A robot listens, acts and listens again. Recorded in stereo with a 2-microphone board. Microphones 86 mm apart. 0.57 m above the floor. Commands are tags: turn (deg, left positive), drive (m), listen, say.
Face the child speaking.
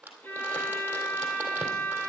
<listen/>
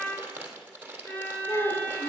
<turn deg="50"/>
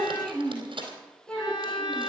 <turn deg="10"/>
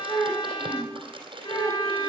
<say>Found it: a child speaking, straight ahead.</say>